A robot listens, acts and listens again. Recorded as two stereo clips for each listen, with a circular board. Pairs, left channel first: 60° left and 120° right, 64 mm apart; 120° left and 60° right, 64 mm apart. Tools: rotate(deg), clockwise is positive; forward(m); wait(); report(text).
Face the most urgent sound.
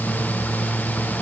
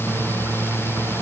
wait()
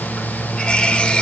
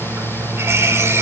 wait()
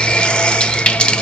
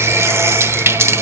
report("I can't make out anything urgent, only a running tap.")